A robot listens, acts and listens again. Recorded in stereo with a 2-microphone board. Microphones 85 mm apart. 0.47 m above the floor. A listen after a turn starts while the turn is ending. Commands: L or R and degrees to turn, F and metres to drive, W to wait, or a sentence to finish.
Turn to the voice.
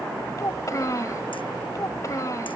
L40
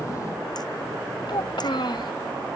L90
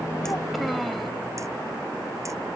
W
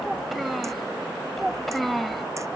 Facing the child speaking.